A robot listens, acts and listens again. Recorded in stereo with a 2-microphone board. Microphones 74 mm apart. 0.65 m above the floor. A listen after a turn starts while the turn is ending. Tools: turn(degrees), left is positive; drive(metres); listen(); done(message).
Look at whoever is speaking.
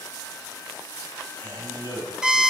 turn(degrees=65)
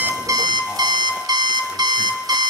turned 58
listen()
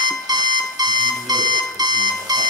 listen()
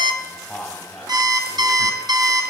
turn(degrees=10)
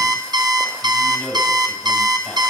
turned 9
done("Found it: a man speaking, straight ahead, 2 to 4 m away.")